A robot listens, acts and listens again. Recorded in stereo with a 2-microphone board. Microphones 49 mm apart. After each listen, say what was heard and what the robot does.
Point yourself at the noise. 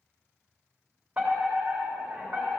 The fire alarm: about 30° right or 150° right. Turn 30° right.
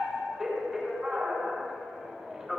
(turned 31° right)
Facing the fire alarm, 2 to 4 m away.